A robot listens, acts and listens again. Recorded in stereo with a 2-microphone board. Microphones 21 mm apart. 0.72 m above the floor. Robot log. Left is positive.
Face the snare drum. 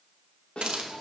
note: The snare drum: about 65° left or 115° left.
cmd yaw +65
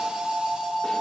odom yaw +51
cmd idle
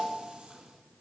cmd idle
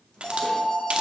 end: I heard a snare drum, but can't make it out now. It was about 15° left or 60° left.